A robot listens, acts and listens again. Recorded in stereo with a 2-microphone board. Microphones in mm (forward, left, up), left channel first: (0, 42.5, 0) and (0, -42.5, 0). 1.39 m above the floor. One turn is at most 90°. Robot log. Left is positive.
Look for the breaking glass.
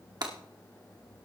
note: The breaking glass: about 60° right or 120° right.
cmd yaw -60
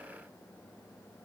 cmd idle
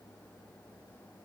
end: I heard breaking glass, but can't make it out now. It was about straight ahead or 60° right.